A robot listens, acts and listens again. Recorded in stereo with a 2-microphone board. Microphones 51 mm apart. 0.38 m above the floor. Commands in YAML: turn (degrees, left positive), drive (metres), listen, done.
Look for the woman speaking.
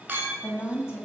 turn: 55
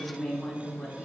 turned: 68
done: "Found it: a woman speaking, straight ahead."